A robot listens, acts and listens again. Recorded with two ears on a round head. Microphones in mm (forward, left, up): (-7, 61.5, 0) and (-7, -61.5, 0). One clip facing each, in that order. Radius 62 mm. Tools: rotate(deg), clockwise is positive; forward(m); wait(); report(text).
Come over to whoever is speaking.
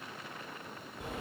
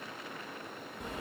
wait()
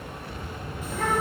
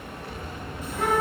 rotate(-75)
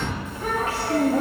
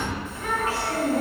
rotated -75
rotate(-30)
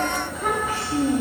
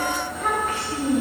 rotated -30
forward(1.0)
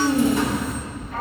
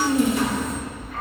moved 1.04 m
forward(1.0)
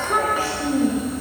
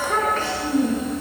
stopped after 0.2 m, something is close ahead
rotate(-10)
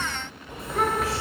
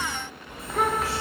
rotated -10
report("I am next to the child speaking.")